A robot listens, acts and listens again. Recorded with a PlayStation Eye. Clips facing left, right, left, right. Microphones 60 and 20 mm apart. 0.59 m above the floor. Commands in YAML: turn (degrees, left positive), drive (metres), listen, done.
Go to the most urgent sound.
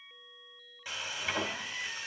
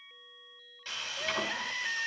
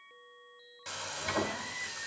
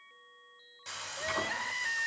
turn: -65
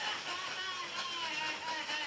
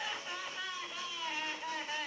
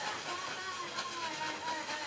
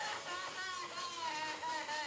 turn: -10
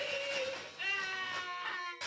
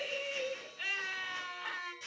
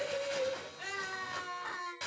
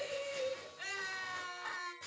drive: 1.0
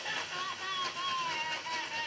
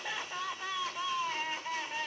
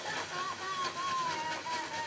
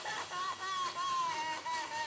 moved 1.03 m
drive: 1.0
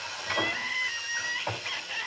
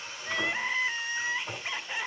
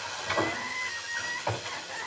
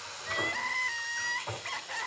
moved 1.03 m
turn: -15
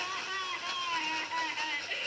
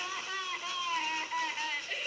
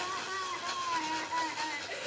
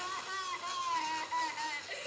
drive: 1.0
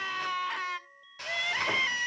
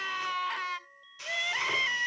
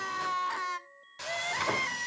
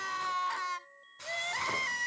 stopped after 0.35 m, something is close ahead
done: "Arrived at the crying, straight ahead."